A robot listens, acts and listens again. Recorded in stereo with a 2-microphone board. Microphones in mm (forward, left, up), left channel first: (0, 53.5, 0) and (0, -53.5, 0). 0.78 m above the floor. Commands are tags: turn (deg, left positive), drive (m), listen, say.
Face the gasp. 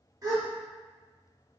<turn deg="-35"/>
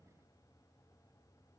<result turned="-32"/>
<listen/>
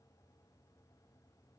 <say>I heard a gasp, but can't make it out now. It was about straight ahead or 115° right.</say>